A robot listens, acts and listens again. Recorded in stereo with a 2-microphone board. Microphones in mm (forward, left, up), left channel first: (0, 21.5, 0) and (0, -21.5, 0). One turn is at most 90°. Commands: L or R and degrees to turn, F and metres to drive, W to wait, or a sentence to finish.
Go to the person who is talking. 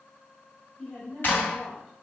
L20
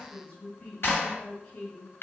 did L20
L90
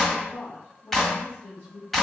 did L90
L45
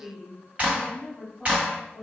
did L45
F1.0
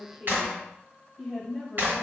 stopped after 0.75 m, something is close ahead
I am next to the woman speaking.